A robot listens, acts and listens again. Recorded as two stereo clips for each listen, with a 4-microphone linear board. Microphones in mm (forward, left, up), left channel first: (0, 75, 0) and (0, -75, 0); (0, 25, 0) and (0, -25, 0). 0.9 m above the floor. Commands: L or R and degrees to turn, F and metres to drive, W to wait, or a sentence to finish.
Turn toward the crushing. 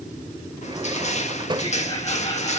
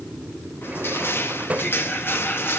L50
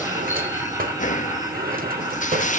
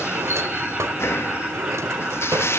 L70
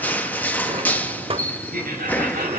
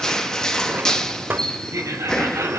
L15
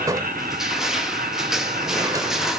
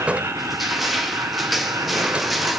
Facing the crushing.